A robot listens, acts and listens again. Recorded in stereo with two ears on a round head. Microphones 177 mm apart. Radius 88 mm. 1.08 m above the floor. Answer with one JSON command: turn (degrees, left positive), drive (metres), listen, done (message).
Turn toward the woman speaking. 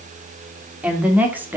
{"turn": -30}
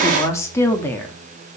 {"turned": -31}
{"turn": 10}
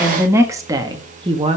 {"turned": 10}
{"turn": -30}
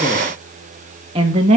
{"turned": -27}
{"turn": -35}
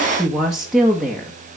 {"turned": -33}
{"done": "Facing the woman speaking, 1 to 2 m away."}